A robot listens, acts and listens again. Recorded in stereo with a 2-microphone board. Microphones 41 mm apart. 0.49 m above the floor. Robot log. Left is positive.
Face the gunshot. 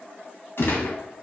note: The gunshot: about 60° left or 120° left.
cmd yaw +60
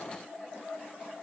cmd idle
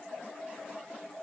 end: I heard a gunshot, but can't make it out now. It was about straight ahead or 60° left.